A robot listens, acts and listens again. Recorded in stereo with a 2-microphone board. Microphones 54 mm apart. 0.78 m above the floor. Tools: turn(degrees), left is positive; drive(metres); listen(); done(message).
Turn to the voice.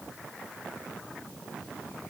listen()
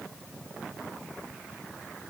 listen()
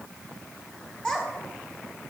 turn(degrees=30)
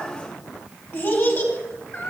turn(degrees=135)
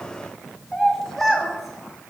done("Found it: a child speaking, straight ahead, 1 to 2 m away.")